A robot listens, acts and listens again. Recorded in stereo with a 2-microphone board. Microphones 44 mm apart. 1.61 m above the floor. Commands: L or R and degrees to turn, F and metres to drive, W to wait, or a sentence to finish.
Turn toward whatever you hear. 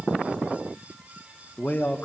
L45
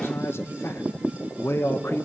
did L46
L90
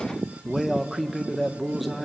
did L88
Facing the man speaking, 1 to 2 m away.